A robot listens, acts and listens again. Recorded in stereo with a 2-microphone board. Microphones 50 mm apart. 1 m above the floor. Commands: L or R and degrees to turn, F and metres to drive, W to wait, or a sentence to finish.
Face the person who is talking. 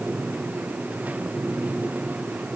W
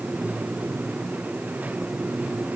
W
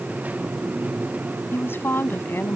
L45
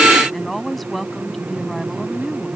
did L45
Facing the woman speaking.